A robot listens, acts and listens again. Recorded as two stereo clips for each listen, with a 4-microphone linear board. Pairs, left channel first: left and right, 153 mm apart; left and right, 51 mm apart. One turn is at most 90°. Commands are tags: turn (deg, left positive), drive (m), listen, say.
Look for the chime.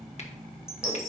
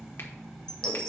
<turn deg="20"/>
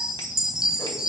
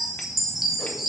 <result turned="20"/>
<say>Found it: a chime, straight ahead, 1 to 2 m away.</say>